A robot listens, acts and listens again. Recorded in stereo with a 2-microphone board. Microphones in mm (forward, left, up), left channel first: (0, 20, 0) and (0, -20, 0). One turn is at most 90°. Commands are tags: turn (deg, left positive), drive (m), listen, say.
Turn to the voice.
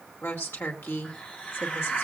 <turn deg="90"/>
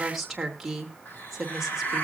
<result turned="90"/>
<say>Found it: a woman speaking, straight ahead, 2 to 4 m away.</say>